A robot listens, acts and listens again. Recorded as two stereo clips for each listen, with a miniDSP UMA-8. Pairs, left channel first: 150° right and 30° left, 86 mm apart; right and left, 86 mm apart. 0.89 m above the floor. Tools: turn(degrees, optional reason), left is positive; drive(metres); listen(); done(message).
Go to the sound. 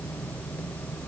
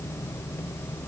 listen()
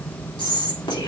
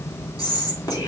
turn(degrees=-135, reason="The whispering: 135° right.")
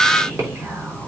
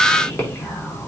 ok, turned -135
turn(degrees=-30, reason="The whispering is now 30° right.")
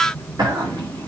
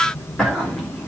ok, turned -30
drive(metres=1.0)
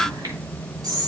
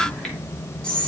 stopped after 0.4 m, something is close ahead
turn(degrees=-10, reason="The whispering is now 10° right.")
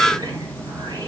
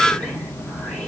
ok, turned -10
listen()
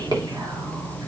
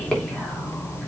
turn(degrees=-10, reason="The whispering is now 10° right.")
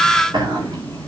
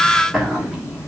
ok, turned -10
done("Blocked. The whispering is further on, straight ahead.")